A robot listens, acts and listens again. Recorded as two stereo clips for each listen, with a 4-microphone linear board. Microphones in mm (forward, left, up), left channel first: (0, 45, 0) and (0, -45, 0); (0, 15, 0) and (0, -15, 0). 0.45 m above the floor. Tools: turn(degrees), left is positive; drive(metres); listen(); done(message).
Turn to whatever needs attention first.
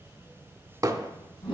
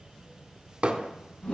listen()
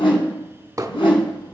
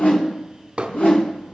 listen()
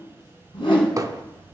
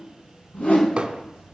done("I can't make out anything urgent to turn to.")